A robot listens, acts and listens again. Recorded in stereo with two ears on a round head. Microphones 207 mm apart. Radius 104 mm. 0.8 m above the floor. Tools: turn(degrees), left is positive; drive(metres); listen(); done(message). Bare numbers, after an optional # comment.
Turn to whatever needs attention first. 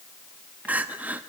turn(-30)
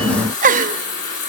# So it is at 140° right.
turn(-140)
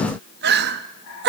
# The crying is now 55° right.
turn(-55)
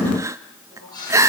# The crying is now 15° right.
turn(-15)
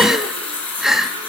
done("Found it: crying, straight ahead.")